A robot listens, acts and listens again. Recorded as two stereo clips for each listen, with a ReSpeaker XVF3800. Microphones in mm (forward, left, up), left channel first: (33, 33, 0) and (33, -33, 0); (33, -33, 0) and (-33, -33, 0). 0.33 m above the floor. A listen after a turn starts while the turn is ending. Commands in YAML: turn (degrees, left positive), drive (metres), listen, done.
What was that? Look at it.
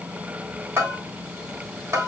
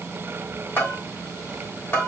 turn: -50
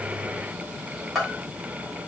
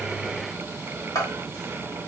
done: "Found it: a bell, straight ahead, 2 to 4 m away."